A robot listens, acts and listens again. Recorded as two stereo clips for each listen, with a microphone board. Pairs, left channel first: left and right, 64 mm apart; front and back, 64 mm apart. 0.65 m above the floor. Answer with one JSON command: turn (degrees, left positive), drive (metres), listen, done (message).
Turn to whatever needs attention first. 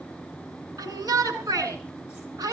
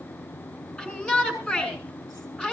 {"turn": -70}
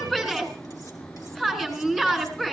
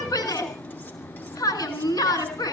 {"turn": 10}
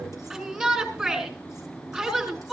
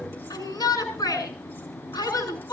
{"done": "Facing the shout, over 4 m away."}